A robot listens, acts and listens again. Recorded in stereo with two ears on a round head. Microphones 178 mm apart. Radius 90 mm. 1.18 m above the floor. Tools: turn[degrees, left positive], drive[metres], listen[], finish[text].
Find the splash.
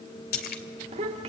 Thought: The splash: about 50° left or 130° left.
Action: turn[50]
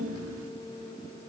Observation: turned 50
Action: listen[]
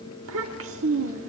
Action: finish[I heard a splash, but can't make it out now. It was about straight ahead or 80° left.]